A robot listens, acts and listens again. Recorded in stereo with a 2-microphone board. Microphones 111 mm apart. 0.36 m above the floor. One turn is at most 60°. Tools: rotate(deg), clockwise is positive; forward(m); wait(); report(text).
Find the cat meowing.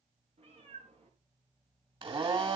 rotate(55)
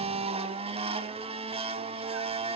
wait()
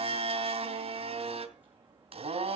rotate(15)
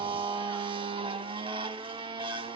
wait()
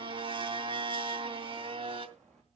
report("Facing the cat meowing.")